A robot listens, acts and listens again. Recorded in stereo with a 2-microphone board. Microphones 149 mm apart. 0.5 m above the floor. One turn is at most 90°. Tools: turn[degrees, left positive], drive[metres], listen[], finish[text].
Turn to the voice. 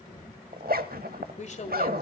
Thought: The woman speaking: about 50° left or 130° left.
Action: turn[50]
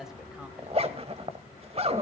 Action: listen[]
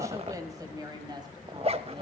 Thought: So it is at 30° right.
Action: turn[-30]
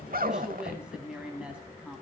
Action: finish[Found it: a woman speaking, straight ahead, 2 to 4 m away.]